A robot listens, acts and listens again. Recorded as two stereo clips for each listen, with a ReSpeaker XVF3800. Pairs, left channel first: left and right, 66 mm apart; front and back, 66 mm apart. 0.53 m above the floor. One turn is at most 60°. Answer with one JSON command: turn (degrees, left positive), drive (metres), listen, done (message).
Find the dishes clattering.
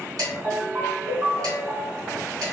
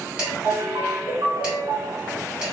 {"turn": -60}
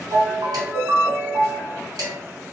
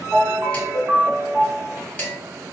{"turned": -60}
{"turn": -60}
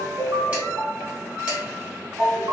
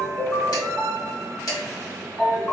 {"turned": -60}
{"turn": -20}
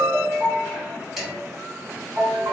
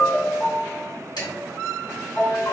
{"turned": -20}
{"done": "Found it: dishes clattering, straight ahead."}